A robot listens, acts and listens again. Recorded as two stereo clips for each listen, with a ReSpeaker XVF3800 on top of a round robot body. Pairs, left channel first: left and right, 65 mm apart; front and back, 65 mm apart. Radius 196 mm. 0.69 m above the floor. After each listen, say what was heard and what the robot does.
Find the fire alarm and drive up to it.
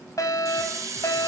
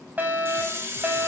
The fire alarm: 120° left. Turn 120° left.
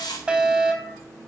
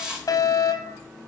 The fire alarm is now 15° right. Turn 15° right.
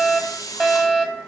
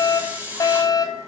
Drive 1.0 m forward.
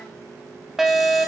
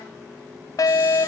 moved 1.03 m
Drive 1.0 m forward.
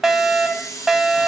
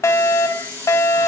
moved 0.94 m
Drive 1.0 m forward.
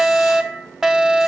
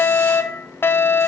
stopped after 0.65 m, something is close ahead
The fire alarm is now 10° right. Turn 10° right.
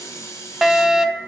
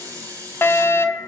I am next to the fire alarm.